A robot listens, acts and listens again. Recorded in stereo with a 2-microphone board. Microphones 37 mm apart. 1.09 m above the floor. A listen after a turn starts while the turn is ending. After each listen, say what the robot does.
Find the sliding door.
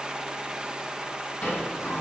Turn 90° left.
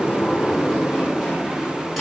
Facing the sliding door, over 4 m away.